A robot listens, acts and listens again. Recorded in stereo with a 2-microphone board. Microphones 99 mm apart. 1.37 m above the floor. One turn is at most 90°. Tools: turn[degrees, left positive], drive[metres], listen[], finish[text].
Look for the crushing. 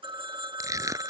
Thought: The crushing: about 35° right or 145° right.
Action: turn[-35]
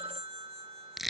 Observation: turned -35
Action: finish[Found it: crushing, straight ahead.]